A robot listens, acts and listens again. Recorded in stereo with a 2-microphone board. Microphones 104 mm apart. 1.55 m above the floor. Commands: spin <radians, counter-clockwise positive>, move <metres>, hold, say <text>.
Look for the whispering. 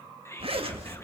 spin 0.44
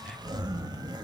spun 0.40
hold
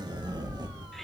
hold
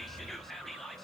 say Facing the whispering.